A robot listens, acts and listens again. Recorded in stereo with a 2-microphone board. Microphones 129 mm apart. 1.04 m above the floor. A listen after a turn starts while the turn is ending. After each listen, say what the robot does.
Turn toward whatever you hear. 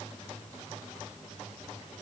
Keep listening.
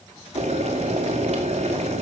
Turn 55° right.
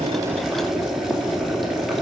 Facing the boiling.